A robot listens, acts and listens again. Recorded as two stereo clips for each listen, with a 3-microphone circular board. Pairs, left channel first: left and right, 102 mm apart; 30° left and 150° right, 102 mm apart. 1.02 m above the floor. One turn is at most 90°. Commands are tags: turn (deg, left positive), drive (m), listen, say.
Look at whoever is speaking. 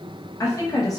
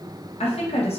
<turn deg="35"/>
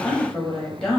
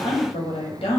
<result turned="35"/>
<say>Found it: a woman speaking, straight ahead, under 1 m away.</say>